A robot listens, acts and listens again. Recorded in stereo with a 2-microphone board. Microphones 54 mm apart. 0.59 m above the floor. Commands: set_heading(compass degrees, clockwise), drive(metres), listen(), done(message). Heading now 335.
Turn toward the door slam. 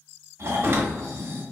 set_heading(20)
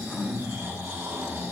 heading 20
listen()
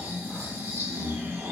done("I heard a door slam, but can't make it out now. It was about straight ahead or 90° right.")